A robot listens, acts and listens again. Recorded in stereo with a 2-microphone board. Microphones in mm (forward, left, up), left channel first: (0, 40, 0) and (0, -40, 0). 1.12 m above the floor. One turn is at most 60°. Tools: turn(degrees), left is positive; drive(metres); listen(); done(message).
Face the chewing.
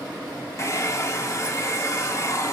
listen()
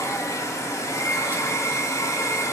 listen()
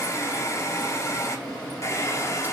done("I can't make out chewing to turn to.")